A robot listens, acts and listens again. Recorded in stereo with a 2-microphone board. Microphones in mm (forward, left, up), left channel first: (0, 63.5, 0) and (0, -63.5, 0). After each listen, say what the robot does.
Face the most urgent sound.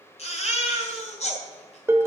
Turn 60° left.
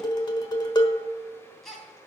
Found it: a baby crying, straight ahead, 2 to 4 m away.